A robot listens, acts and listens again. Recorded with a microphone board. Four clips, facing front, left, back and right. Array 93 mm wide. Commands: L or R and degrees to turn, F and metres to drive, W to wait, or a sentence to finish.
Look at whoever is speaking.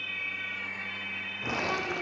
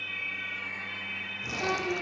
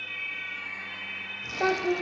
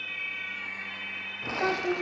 R150
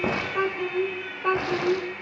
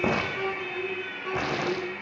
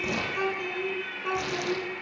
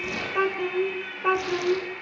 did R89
R50
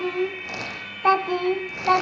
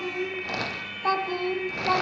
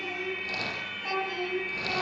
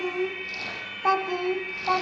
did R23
Found it: a child speaking, straight ahead, 1 to 2 m away.